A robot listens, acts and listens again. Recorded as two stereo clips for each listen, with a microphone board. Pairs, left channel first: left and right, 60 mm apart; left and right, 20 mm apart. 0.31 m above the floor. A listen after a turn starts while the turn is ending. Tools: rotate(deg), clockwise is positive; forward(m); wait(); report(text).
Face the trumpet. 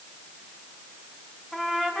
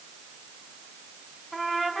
rotate(-30)
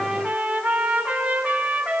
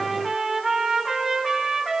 rotate(25)
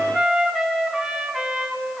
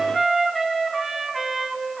rotate(10)
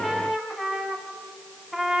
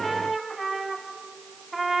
report("Found it: a trumpet, straight ahead.")